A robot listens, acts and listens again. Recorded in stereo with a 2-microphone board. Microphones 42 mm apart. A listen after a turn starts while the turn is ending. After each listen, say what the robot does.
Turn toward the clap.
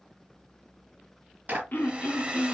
Turn 45° right.
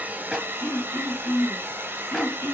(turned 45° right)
Keep listening.
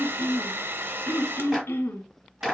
Found it: a clap, straight ahead.